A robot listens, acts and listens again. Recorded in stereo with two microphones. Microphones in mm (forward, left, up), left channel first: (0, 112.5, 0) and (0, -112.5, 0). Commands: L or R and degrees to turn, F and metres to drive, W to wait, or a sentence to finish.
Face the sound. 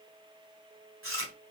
R65
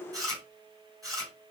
R15
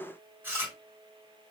R10
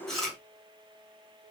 Found it: chewing, straight ahead.